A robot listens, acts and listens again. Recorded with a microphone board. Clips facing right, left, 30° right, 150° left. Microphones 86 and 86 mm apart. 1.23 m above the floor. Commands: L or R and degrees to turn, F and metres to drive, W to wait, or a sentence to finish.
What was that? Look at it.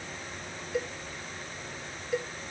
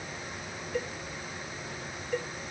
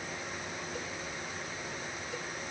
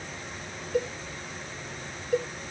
R175
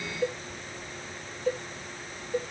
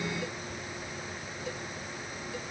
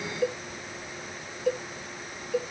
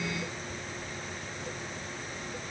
R45
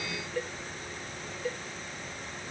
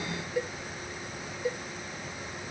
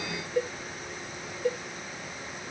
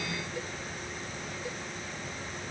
L10
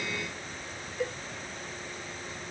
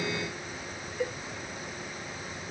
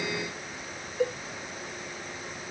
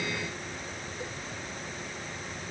Facing the cowbell.